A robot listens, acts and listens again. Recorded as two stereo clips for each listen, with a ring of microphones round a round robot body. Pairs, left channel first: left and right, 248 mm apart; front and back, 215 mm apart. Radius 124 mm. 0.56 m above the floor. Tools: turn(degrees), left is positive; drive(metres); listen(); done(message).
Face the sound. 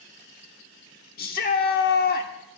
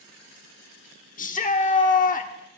turn(degrees=45)
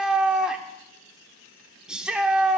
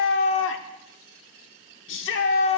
done("Facing the shout.")